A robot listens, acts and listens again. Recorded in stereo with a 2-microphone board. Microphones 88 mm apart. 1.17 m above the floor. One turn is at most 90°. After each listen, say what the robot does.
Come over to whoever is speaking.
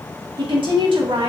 Turn 70° right.
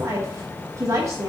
Turn 40° right.
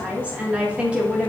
Turn 15° right.
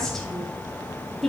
Drive 1.0 m forward.
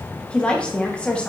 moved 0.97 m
Turn 10° left.
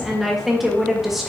Drive 1.0 m forward.
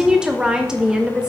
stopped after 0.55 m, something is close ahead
Turn 10° right.
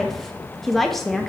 I am next to the woman speaking.